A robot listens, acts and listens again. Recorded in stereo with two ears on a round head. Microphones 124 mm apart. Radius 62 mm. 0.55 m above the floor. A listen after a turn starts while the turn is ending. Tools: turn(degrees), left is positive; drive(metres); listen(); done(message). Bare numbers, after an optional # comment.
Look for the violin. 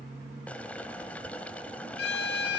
turn(90)
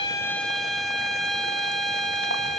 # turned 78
done("Facing the violin, 1 to 2 m away.")